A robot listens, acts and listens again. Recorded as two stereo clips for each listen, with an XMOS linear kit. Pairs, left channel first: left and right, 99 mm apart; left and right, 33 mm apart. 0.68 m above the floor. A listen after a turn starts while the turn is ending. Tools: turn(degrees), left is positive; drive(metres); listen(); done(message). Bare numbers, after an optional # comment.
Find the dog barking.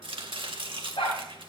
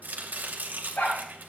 turn(90)
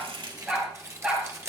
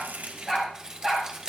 # So it is at 10° right.
turn(-10)
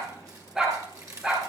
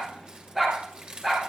done("Found it: a dog barking, straight ahead, over 4 m away.")